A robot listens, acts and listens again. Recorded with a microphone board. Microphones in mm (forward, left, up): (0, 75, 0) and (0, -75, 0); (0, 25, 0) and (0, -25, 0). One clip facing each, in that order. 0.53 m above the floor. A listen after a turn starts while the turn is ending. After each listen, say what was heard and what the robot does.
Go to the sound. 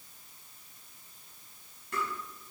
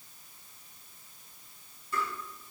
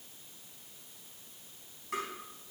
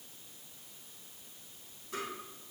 The tapping: about 75° left or 105° left. Turn 75° left.
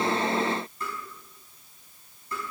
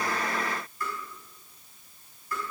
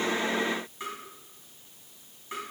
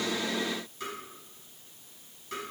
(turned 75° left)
So it is at 25° left. Turn 25° left.
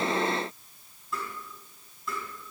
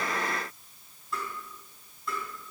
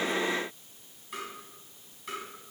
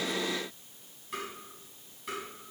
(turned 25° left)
Drive 1.0 m forward.
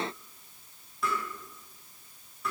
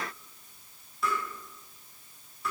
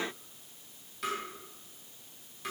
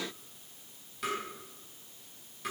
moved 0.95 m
Drive 1.0 m forward.
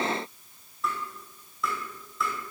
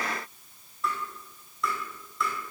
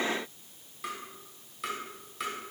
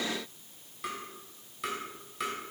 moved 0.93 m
Drive 1.0 m forward.
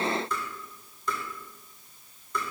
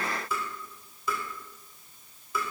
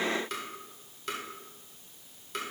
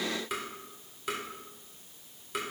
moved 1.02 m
Drive 1.0 m forward.
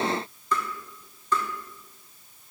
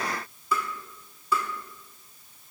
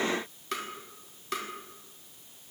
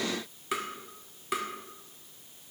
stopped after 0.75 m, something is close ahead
The tapping is now 10° right. Turn 10° right.
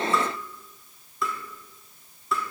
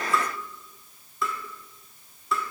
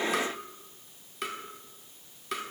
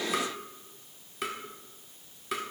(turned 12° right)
Arrived at the tapping, straight ahead.